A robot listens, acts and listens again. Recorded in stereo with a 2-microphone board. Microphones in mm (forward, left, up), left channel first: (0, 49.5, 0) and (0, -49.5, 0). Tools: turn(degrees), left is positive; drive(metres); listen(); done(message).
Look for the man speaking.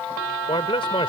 turn(degrees=70)
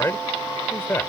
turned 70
turn(degrees=20)
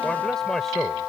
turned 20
done("Found it: a man speaking, straight ahead.")